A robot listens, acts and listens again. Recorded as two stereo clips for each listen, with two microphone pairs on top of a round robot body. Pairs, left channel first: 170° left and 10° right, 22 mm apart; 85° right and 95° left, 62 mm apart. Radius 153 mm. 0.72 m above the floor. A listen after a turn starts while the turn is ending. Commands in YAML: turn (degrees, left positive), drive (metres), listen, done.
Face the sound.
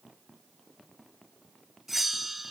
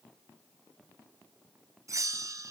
turn: 70
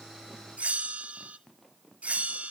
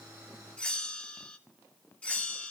turn: -15
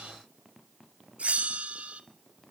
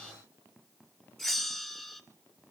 done: "Found it: a bell, straight ahead, 2 to 4 m away."